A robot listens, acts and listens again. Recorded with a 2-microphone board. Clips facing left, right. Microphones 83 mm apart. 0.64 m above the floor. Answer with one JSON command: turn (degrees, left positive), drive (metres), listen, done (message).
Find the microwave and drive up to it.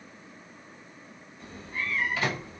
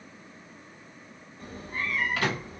{"turn": -65}
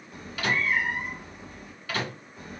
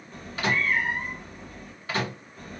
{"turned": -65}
{"turn": -35}
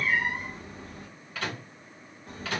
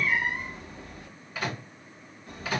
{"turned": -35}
{"turn": -10}
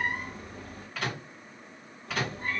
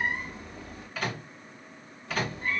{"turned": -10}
{"drive": 1.0}
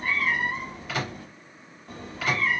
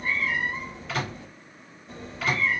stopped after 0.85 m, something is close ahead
{"done": "Arrived at the microwave, straight ahead."}